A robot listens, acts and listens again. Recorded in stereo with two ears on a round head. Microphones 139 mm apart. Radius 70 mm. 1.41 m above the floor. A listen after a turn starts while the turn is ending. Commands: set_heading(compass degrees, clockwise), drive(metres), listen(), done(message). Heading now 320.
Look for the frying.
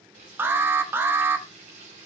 set_heading(5)
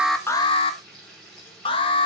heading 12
done("Found it: frying, straight ahead.")